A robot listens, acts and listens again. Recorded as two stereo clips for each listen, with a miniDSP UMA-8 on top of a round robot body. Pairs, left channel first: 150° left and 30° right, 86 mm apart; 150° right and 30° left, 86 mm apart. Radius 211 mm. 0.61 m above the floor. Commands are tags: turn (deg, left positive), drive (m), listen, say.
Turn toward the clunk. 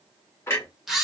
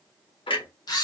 <turn deg="-150"/>
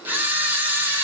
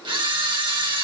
<say>Facing where the clunk came from. I can't hear it now.</say>